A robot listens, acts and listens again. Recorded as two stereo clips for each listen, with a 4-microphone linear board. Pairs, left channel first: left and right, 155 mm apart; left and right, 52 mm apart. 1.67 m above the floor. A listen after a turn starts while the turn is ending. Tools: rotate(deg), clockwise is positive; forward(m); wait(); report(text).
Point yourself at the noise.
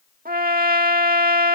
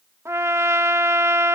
rotate(70)
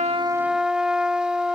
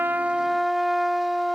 report("Facing the trumpet.")